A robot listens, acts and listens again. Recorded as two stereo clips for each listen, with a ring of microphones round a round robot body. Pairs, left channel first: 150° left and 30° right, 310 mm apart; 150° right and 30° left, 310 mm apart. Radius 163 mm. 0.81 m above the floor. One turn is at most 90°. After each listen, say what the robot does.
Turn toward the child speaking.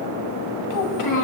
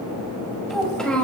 Turn 90° left.
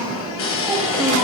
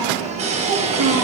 Turn 55° left.
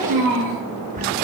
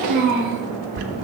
Facing the child speaking.